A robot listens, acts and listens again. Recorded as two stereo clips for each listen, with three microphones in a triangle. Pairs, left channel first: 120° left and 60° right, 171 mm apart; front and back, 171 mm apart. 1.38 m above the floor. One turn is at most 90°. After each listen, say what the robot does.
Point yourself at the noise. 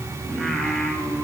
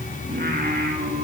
Turn 90° right.
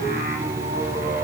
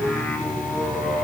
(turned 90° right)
Turn 90° right.
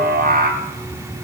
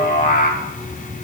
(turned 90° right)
Turn 35° right.
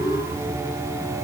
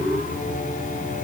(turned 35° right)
Keep listening.
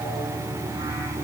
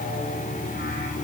Keep listening.
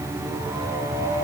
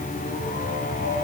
Found it: singing, straight ahead, 2 to 4 m away.